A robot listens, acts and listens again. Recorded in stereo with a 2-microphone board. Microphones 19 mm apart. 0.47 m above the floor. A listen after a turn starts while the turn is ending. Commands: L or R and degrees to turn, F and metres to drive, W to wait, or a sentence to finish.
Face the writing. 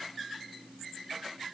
W
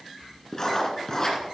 L30
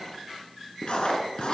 L120
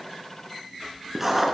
R10
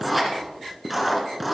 Facing the writing, 2 to 4 m away.